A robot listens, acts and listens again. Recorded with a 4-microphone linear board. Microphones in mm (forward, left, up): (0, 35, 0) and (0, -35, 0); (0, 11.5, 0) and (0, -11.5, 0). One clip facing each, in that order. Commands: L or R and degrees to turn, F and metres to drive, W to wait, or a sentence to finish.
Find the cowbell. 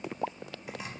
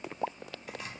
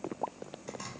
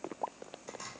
W
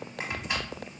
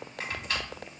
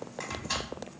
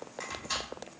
W
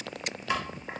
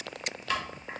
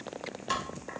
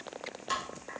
I can't make out a cowbell, only chopping.